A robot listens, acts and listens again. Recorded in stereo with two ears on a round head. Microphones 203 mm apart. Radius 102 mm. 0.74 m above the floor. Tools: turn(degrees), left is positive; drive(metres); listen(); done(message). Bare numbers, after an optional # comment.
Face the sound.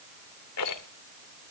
# The rattle: about 75° left or 105° left.
turn(75)
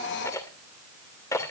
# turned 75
# So it is at 15° left.
turn(15)
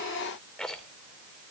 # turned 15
done("Found it: a rattle, straight ahead.")